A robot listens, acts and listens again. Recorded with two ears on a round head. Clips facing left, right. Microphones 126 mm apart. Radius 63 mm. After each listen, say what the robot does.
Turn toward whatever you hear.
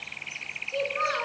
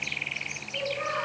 Turn 90° left.
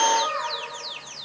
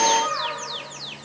Found it: a child speaking, straight ahead.